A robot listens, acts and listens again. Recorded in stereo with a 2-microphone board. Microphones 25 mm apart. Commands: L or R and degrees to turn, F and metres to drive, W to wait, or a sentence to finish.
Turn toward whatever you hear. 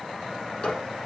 L45
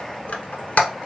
L90
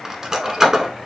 R25
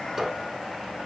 R15
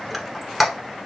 Found it: a squeak, straight ahead.